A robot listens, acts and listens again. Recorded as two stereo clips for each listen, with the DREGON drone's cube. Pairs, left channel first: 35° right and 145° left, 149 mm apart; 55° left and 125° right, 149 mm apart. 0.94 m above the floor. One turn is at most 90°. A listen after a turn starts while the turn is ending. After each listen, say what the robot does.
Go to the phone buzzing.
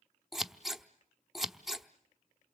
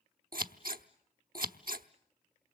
Keep listening.
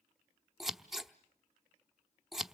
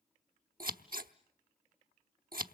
Keep listening.
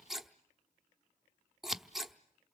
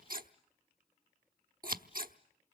I can't make out a phone buzzing to turn to.